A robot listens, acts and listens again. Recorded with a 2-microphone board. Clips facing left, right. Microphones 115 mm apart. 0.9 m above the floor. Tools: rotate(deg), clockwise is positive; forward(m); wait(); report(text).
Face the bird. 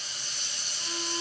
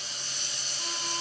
wait()
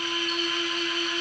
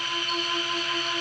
wait()
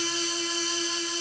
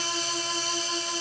report("I can't make out a bird, only a violin.")